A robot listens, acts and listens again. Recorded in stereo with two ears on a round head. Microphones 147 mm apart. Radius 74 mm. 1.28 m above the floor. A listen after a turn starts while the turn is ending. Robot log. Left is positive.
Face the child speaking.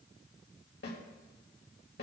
cmd idle
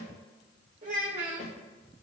note: The child speaking: about 45° right or 135° right.
cmd yaw -45
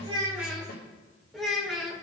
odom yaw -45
end: Found it: a child speaking, straight ahead.